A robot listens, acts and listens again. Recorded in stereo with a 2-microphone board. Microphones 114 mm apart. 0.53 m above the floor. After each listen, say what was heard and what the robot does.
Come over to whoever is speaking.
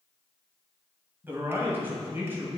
The man speaking: about 20° right or 160° right. Turn 20° right.
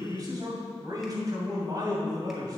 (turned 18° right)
So it is at 145° right. Turn 145° right.
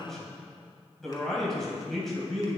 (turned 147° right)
Drive 1.0 m forward.
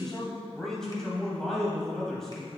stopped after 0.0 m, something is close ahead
Something is in my way. I am facing the man speaking but have not reached it.